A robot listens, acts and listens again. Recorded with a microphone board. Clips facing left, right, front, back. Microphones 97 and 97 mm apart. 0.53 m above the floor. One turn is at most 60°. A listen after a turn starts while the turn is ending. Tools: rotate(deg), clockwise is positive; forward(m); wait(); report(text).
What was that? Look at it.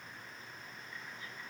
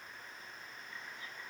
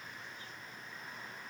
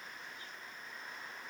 wait()
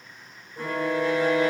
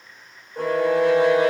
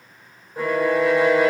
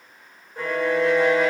rotate(60)
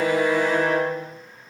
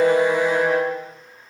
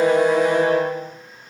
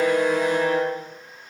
rotate(20)
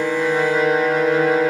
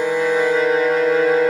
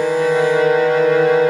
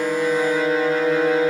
report("Found it: a violin, straight ahead, 2 to 4 m away.")